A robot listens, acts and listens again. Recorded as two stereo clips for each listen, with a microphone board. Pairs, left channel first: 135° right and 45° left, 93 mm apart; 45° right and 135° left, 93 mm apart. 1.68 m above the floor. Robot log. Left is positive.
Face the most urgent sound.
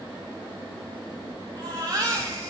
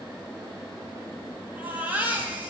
note: The baby crying: 70° left.
cmd yaw +70
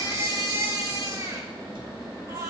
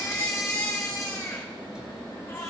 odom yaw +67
end: Facing the baby crying, 2 to 4 m away.